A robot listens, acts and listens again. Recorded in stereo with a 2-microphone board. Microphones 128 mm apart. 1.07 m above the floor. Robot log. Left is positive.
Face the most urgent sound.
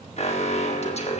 note: The alarm: about 55° left or 125° left.
cmd yaw +55
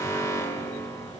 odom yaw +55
note: So it is at 25° left.
cmd yaw +25
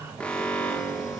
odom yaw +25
note: The alarm is now 10° left.
cmd yaw +10
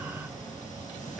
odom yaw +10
cmd idle
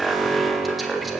end: Found it: an alarm, straight ahead.